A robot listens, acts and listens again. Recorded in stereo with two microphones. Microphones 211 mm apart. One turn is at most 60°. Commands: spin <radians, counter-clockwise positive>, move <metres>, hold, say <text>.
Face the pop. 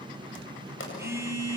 spin 1.05
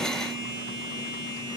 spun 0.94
spin 0.61
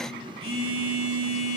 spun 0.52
say Facing where the pop came from. I can't hear it now.